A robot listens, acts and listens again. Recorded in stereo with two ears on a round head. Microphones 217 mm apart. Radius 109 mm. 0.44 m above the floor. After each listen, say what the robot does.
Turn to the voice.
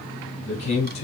Turn 30° left.
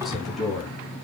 Facing the man speaking, 2 to 4 m away.